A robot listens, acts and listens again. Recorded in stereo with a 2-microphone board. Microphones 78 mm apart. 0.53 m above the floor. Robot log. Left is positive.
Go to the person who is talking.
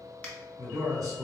note: The man speaking: about 50° right or 130° right.
cmd yaw -50
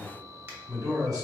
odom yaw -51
note: So it is at 60° right.
cmd yaw -60
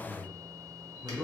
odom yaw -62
cmd fwd 1.0
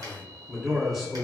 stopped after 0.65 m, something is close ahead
end: Arrived at the man speaking, straight ahead.